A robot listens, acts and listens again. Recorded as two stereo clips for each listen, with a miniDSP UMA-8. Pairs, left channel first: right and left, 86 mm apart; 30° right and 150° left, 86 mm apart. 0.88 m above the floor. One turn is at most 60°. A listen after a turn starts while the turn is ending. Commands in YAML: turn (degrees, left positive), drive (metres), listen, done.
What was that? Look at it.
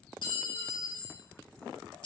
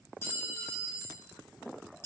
turn: -60
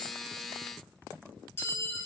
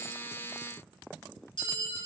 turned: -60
turn: -25
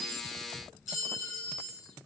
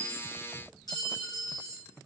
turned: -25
done: "Found it: a clink, straight ahead, under 1 m away."